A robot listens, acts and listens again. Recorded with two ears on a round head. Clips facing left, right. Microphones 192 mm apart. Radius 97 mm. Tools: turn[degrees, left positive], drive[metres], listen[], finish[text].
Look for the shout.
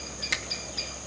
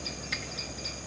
Action: listen[]
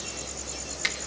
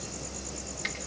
Action: listen[]
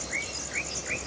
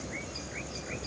Action: finish[I can't make out a shout to turn to.]